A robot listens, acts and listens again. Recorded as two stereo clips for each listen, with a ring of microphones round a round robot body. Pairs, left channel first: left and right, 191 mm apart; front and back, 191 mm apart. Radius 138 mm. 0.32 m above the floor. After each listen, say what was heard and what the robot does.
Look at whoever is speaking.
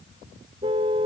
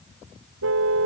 Keep listening.
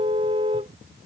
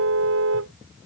Keep listening.
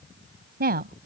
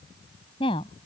The woman speaking: 65° right. Turn 65° right.
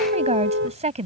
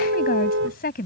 The woman speaking is now 40° right. Turn 40° right.
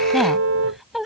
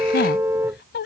Found it: a woman speaking, straight ahead.